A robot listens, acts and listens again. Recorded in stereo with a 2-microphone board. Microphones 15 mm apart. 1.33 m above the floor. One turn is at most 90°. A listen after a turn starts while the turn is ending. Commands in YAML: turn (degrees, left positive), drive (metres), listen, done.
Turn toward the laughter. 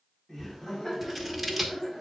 turn: 30
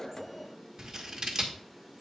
turn: 90
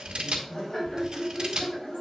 turn: 35
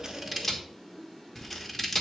turn: -20
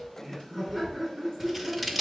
done: "Facing the laughter."